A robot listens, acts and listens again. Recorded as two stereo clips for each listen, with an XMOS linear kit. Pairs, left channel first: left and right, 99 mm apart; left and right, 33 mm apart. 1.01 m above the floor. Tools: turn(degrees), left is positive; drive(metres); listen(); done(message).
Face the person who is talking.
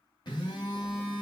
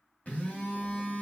listen()
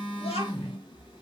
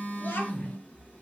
turn(degrees=90)
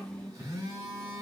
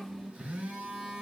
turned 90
turn(degrees=10)
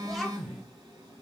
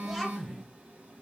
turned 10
listen()
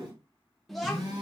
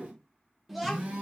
done("Facing the child speaking.")